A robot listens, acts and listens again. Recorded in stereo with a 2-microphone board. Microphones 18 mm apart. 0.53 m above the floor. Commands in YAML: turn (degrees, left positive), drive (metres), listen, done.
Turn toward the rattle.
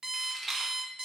turn: 30
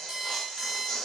listen: true
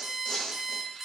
listen: true
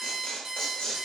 done: "I heard a rattle, but can't make it out now. It was about 30° right or 150° left."